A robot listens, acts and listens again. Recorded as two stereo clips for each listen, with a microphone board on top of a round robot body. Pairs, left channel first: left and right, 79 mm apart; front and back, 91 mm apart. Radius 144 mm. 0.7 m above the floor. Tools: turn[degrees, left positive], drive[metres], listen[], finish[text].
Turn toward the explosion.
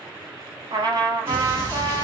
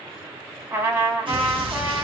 Thought: The explosion: 150° right.
Action: turn[-150]
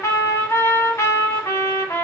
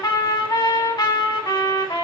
Action: finish[I heard an explosion from this way, but can't make it out now.]